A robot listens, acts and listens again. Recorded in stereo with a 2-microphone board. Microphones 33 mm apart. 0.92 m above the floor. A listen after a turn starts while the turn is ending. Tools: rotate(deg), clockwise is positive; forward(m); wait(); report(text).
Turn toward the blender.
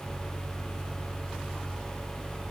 wait()
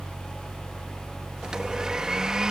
rotate(20)
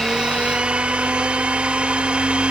rotate(135)
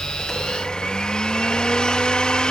rotate(-30)
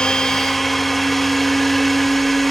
report("Found it: a blender, straight ahead.")